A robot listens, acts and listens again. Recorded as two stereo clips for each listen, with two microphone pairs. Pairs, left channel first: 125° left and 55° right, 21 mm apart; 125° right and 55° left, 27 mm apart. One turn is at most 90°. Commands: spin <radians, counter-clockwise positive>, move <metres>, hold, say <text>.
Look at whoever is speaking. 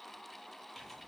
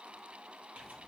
hold
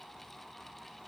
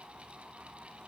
hold
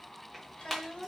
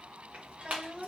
spin 1.57
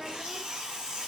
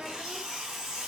hold
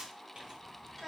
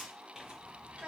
spin 0.70
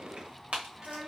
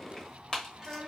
say Facing the child speaking.